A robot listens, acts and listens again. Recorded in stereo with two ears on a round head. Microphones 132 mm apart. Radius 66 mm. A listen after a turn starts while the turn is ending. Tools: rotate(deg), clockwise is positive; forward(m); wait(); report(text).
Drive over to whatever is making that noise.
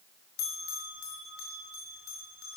rotate(-90)
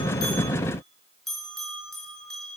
forward(1.0)
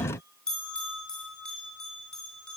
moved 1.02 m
forward(1.0)
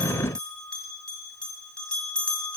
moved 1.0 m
forward(1.0)
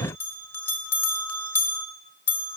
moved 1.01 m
rotate(-15)
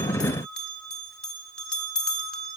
forward(1.0)
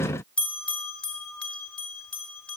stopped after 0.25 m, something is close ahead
rotate(-10)
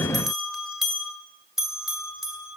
report("I am next to the bell.")